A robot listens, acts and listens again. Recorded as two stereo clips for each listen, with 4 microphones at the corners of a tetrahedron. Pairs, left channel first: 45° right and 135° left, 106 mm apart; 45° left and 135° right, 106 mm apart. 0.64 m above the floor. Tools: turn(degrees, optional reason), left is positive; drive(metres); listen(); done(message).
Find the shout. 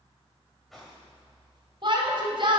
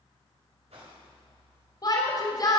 turn(degrees=95, reason="The shout: 95° left.")
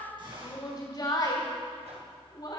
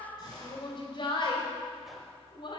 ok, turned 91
done("Found it: a shout, straight ahead, 2 to 4 m away.")